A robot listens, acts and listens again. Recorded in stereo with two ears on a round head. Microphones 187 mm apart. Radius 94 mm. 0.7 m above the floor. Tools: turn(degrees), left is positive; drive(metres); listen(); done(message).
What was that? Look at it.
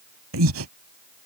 turn(degrees=-75)
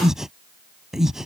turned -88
done("Facing the breathing.")